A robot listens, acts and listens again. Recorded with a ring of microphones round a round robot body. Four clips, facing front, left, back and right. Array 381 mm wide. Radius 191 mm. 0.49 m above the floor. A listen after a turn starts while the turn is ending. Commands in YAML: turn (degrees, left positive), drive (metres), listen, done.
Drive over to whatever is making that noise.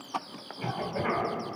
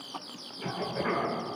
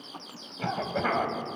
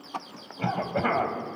turn: -115
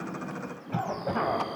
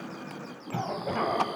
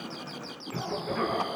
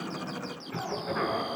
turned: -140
turn: 25
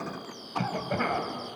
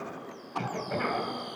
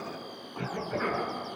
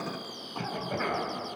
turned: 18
drive: 1.0
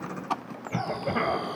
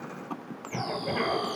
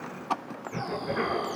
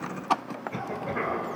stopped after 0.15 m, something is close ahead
done: "Something is in my way. I am facing the cough but have not reached it."